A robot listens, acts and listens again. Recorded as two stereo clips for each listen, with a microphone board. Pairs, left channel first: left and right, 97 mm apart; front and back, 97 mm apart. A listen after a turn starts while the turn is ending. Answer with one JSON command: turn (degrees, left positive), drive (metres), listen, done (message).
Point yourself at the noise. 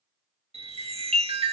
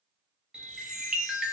{"turn": -100}
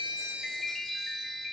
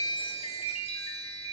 {"done": "Facing the chime."}